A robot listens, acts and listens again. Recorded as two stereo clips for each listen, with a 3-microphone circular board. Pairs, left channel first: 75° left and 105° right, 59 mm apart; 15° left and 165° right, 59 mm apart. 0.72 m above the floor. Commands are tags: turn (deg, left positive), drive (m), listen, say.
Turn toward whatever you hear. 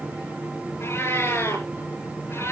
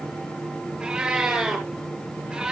<turn deg="115"/>
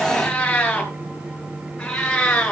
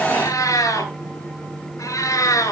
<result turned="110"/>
<say>Facing the cat meowing, over 4 m away.</say>